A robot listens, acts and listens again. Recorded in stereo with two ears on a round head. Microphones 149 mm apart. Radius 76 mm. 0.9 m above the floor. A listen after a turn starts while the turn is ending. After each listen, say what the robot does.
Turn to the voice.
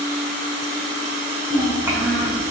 Turn 15° right.
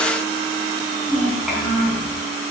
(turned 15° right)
Facing the child speaking.